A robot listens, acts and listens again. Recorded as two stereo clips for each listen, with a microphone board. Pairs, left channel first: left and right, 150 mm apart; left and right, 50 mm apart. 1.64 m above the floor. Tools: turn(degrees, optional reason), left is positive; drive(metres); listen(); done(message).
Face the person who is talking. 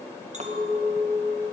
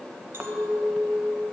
listen()
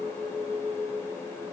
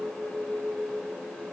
listen()
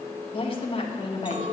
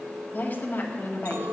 turn(degrees=35, reason="The woman speaking: about 35° left or 145° left.")
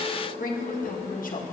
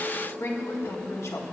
turn(degrees=110, reason="So it is at 110° left.")
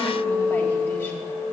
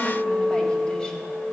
listen()
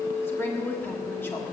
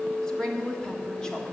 turn(degrees=15, reason="The woman speaking is now 15° left.")
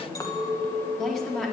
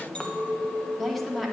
done("Facing the woman speaking, 1 to 2 m away.")